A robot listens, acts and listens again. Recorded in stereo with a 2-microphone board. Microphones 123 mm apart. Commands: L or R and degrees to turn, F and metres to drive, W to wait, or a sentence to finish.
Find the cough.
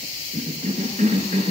R70
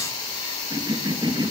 R35
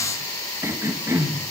R25
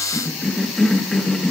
Found it: a cough, straight ahead.